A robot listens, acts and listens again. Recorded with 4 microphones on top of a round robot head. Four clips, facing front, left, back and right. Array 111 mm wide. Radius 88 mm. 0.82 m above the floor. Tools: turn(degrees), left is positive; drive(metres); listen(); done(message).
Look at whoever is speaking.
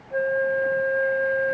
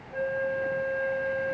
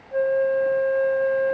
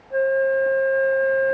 listen()
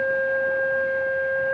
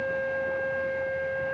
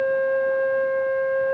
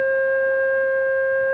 listen()
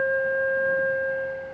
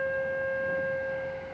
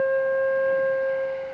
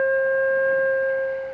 done("I can't make out anyone speaking, only a flute.")